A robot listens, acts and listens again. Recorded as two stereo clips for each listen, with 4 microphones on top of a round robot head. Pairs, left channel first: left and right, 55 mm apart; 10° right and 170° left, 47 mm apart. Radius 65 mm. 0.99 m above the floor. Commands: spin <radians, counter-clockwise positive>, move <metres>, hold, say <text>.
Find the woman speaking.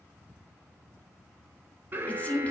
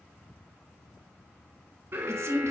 spin 2.71
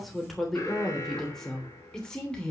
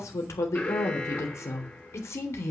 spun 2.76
spin 0.26
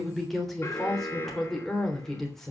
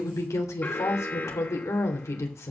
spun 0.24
say Found it: a woman speaking, straight ahead, 2 to 4 m away.